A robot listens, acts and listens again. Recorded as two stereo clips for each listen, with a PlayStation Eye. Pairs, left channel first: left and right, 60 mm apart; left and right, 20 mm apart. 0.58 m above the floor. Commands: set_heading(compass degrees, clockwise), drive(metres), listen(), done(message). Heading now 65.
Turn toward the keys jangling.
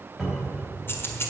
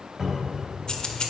set_heading(20)
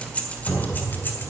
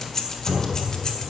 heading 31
set_heading(356)
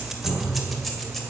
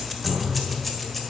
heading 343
done("Facing the keys jangling, 2 to 4 m away.")